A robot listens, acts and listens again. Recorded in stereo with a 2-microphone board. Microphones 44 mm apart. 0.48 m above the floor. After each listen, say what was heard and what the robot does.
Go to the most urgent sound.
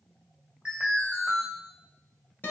The alarm: about 25° right or 155° right. Turn 25° right.
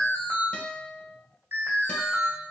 So it is at 130° right. Turn 130° right.
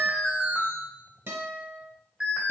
The alarm is now 25° right. Turn 25° right.
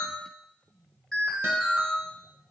Drive 1.0 m forward.
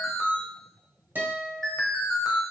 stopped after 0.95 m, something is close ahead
I am next to the alarm.